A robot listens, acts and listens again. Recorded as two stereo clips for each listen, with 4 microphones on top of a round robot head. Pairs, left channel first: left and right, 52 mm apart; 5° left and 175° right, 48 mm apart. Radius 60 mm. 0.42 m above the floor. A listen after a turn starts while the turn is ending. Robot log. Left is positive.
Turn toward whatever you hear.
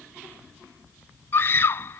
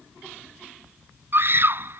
note: The scream: 140° left.
cmd yaw +140
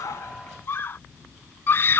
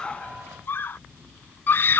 note: The scream is now 45° left.
cmd yaw +45
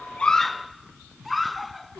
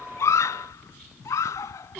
end: Found it: a scream, straight ahead.